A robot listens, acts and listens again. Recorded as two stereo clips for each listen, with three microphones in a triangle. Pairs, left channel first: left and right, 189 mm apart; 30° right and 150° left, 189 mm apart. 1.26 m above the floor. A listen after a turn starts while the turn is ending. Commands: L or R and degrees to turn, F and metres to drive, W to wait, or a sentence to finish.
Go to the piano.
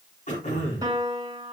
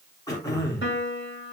R20
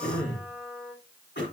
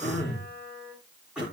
F1.0
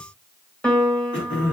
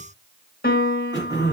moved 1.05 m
F1.0
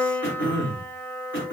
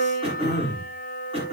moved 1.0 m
L10
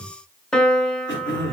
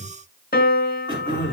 F1.0
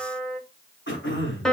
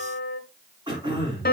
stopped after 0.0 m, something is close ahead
Arrived at the piano, straight ahead.